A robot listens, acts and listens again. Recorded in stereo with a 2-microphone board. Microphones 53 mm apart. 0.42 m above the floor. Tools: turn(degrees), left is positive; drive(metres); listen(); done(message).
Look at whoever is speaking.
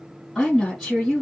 turn(degrees=30)
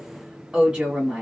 turn(degrees=-30)
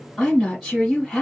done("Facing the woman speaking, 1 to 2 m away.")